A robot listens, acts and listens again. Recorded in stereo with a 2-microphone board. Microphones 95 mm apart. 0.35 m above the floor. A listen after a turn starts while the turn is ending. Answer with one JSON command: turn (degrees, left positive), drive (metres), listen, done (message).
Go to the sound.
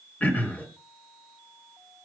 {"turn": 20}
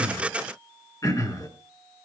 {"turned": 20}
{"turn": 140}
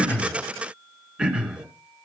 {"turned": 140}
{"turn": -10}
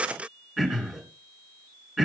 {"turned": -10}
{"drive": 1.0}
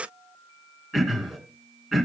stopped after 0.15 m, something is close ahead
{"done": "Blocked. The throat clearing is further on, straight ahead."}